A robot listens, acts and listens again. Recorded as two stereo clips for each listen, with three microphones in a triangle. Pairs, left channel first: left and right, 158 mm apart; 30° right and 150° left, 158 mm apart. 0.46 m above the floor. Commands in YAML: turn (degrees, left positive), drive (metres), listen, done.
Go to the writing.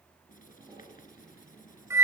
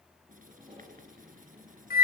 turn: 120
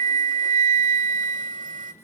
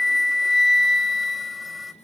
listen: true
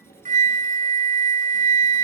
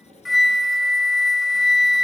listen: true
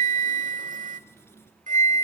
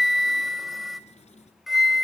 turn: 15
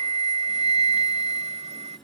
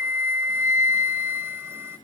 listen: true
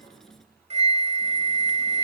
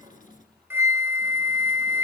drive: 1.0
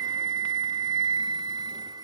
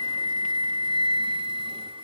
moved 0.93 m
listen: true
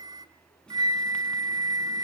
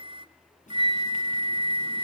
drive: 1.0
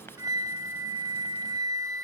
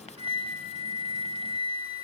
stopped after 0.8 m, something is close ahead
turn: 15
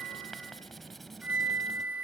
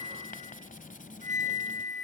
done: "I am next to the writing."